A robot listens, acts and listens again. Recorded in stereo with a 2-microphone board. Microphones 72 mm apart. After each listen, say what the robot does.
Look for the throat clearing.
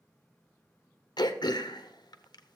Turn 90° left.
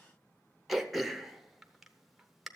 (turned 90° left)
Facing the throat clearing.